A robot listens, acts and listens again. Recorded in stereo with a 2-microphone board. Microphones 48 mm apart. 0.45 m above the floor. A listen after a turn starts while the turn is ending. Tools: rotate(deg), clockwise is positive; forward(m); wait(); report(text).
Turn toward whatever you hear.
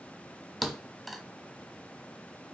rotate(30)
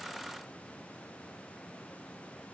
wait()
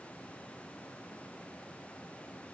report("I heard a thud, but can't make it out now. It was about 25° left or 145° right.")